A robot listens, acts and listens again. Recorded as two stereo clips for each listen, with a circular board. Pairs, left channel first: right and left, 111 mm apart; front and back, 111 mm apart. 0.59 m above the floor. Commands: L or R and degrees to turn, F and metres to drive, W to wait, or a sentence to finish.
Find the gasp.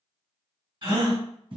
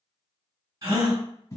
L135
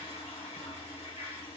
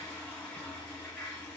Facing where the gasp came from. I can't hear it now.